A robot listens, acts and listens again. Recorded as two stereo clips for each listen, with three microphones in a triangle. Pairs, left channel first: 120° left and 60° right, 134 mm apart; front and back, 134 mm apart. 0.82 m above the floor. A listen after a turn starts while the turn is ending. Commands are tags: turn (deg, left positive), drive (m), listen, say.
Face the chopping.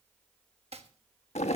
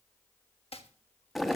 <turn deg="-30"/>
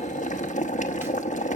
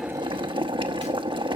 <listen/>
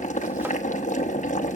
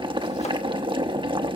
<listen/>
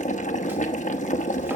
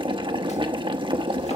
<say>I heard chopping from this way, but can't make it out now.</say>